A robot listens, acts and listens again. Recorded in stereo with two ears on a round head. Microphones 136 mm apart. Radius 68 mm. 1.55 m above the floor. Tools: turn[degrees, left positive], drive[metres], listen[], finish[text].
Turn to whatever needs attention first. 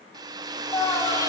Thought: The scream: about 20° left or 160° left.
Action: turn[20]
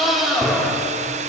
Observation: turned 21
Action: finish[Facing the scream.]